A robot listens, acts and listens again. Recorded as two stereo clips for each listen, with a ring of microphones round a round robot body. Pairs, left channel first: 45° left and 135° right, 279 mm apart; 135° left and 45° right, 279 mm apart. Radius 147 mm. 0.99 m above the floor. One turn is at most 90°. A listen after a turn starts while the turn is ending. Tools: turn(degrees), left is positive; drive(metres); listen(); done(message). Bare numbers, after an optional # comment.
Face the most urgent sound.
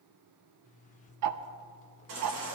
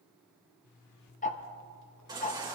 # The baby crying: 120° right.
turn(-90)
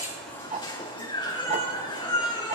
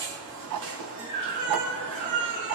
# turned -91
# The baby crying is now 30° right.
turn(-30)
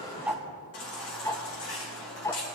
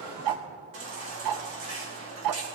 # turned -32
done("Facing the baby crying.")